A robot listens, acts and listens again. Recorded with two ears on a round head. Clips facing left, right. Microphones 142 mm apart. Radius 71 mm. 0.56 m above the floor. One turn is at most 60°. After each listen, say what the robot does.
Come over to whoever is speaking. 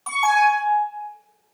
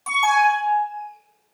Keep listening.
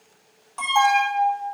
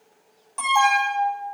Keep listening.
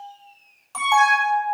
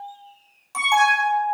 I can't make out anyone speaking, only an alarm.